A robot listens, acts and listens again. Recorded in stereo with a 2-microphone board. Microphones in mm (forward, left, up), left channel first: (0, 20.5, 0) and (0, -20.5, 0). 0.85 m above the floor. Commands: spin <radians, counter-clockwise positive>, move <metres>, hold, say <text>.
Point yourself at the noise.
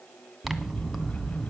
spin -0.52
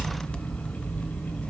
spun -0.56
spin 0.44
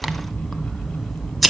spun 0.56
say Facing the scissors.